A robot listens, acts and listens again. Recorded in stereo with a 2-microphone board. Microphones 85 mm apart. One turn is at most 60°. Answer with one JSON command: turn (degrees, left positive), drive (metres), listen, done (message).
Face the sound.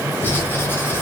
{"turn": 25}
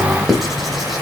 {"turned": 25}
{"done": "Facing the writing."}